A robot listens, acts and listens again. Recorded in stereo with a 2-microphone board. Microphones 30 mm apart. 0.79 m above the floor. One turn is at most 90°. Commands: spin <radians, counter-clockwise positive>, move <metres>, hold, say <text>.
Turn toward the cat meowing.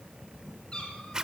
spin 0.61
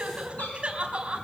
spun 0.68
hold
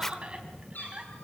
spin 1.57
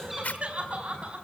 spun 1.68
hold
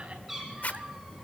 spin -0.17
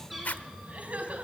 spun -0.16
say Found it: a cat meowing, straight ahead, over 4 m away.